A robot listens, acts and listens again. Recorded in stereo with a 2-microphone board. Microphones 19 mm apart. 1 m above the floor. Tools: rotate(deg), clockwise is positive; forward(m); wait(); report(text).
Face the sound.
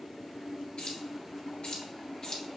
rotate(-40)
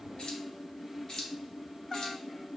rotate(-40)
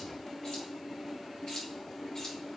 rotate(-45)
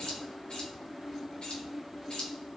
rotate(-85)
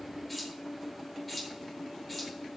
report("Facing the keys jangling.")